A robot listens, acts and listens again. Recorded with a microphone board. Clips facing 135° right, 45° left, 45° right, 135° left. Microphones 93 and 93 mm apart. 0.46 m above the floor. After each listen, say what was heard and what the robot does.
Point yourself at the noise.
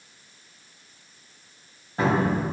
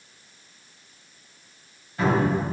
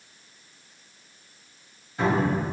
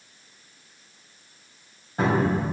The cupboard door: straight behind. Turn 180° left.
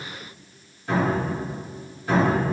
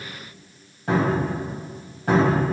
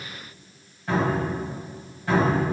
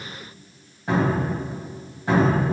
The cupboard door is now 70° left. Turn 70° left.
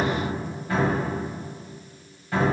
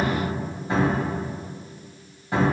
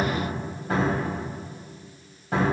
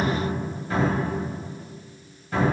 The cupboard door is now 20° right. Turn 20° right.
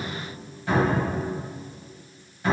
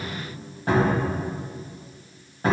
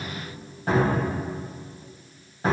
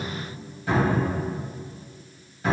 Found it: a cupboard door, straight ahead, 1 to 2 m away.